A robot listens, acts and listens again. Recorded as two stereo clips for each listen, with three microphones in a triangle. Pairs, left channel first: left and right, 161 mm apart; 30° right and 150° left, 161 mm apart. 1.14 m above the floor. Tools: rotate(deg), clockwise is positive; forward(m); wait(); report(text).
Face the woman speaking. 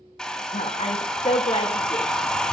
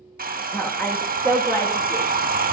rotate(-40)
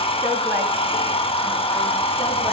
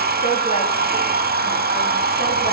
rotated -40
wait()
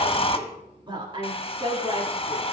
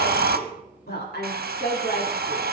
rotate(35)
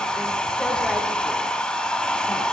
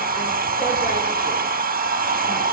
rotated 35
wait()
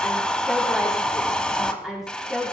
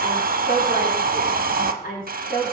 report("Found it: a woman speaking, straight ahead.")